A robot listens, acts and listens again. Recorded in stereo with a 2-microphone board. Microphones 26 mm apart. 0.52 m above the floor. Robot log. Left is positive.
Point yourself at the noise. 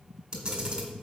note: The camera shutter: about 30° right or 150° right.
cmd yaw -30
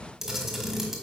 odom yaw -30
end: Found it: a camera shutter, straight ahead.